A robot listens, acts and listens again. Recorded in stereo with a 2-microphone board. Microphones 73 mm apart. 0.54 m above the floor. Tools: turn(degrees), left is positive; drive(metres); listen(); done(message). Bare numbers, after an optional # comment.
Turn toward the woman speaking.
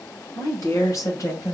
# The woman speaking: about 45° left or 135° left.
turn(45)
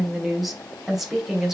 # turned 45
done("Found it: a woman speaking, straight ahead.")